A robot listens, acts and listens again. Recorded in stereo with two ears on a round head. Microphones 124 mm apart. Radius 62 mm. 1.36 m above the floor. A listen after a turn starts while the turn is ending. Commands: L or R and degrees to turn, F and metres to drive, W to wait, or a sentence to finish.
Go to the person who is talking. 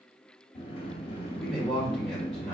L30
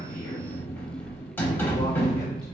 W
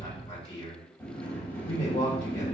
L145
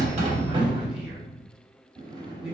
R10
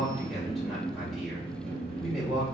F1.0
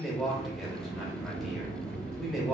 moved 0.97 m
F1.0
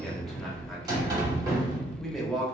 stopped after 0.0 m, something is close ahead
I am next to the man speaking.